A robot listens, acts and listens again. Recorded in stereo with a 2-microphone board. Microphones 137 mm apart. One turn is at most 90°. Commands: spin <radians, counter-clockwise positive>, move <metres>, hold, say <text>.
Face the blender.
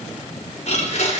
spin 0.96
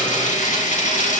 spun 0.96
spin 1.13
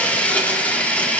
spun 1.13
spin 0.17
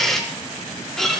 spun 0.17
say Found it: a blender, straight ahead, 2 to 4 m away.